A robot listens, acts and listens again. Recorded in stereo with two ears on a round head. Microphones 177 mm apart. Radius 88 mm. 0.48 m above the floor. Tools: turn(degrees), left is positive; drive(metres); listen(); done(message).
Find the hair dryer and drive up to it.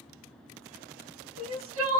listen()
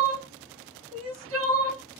listen()
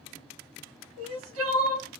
done("I can't make out a hair dryer, only crying.")